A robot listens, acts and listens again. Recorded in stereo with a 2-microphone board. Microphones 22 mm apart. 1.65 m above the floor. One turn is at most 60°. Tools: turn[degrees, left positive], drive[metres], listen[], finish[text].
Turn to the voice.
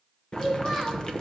Action: turn[30]
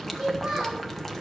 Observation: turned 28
Thought: So it is at 25° right.
Action: turn[-25]
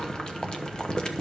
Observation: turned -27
Action: listen[]
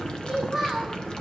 Action: finish[Found it: a child speaking, straight ahead, over 4 m away.]